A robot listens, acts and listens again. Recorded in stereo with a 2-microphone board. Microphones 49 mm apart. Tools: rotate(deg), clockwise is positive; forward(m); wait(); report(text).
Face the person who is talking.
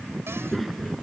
rotate(-30)
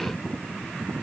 wait()
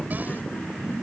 rotate(-145)
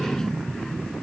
rotate(-10)
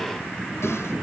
report("Facing the child speaking.")